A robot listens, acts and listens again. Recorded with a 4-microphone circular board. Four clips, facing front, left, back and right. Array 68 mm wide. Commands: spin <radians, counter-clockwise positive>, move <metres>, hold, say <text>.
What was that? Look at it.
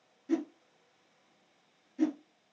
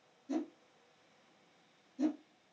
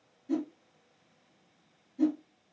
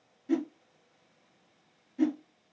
spin -1.13
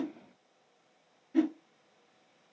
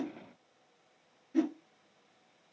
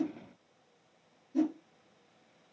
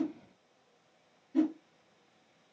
spin 0.26
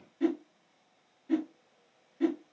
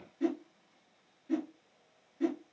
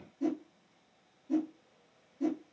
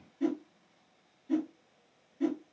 say Found it: a whoosh, straight ahead, 1 to 2 m away.